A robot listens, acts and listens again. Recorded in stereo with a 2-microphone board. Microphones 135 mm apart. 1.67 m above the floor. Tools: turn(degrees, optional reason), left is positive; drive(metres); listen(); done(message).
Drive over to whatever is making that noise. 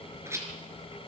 turn(degrees=-20, reason="The rattle: about 20° right or 160° right.")
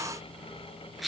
drive(metres=1.0)
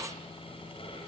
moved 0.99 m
listen()
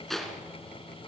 drive(metres=1.0)
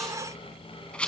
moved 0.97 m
turn(degrees=10, reason="The rattle is now 10° left.")
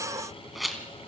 drive(metres=1.0)
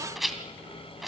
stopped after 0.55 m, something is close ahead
done("I am next to the rattle.")